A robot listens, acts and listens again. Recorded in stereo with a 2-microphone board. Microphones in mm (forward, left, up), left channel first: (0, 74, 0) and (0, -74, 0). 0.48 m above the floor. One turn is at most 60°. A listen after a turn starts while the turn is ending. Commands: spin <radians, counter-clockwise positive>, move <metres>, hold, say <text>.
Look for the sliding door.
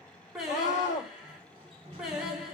spin -0.70
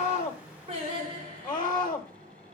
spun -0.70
spin -1.05
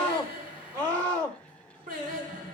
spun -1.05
spin -0.61
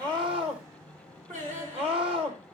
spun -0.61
spin -0.35
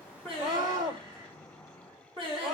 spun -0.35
say Found it: a sliding door, straight ahead, 1 to 2 m away.